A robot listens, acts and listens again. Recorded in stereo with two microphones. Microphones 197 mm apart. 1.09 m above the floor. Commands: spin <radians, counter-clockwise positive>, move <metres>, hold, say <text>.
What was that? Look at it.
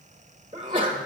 spin -0.44
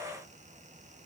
hold
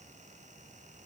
say I heard a sneeze, but can't make it out now. It was about straight ahead or 130° right.